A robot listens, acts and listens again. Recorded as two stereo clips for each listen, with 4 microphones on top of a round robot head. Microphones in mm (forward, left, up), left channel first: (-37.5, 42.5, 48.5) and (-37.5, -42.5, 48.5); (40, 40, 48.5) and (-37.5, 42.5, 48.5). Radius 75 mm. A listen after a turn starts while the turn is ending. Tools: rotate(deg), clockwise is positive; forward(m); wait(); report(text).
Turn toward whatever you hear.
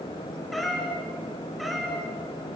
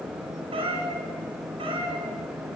rotate(-180)
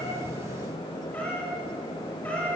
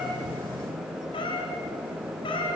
rotate(-10)
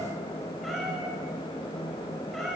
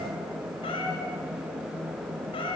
report("Found it: a cat meowing, straight ahead.")